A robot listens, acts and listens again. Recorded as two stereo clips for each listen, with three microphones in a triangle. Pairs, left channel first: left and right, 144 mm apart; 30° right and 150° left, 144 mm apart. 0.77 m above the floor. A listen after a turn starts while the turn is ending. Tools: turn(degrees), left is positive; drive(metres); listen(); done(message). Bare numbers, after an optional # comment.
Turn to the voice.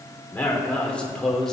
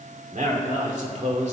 # The man speaking: 175° left.
turn(175)
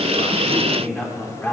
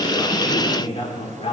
# The man speaking is now 15° left.
turn(15)
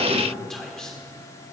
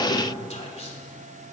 done("Found it: a man speaking, straight ahead.")